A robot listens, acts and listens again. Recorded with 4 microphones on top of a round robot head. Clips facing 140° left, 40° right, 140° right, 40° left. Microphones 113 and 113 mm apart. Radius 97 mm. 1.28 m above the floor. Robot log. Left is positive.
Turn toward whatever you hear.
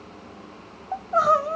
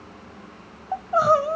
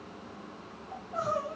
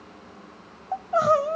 note: The crying: 45° left.
cmd yaw +45
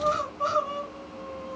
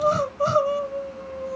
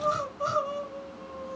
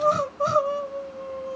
end: Facing the crying.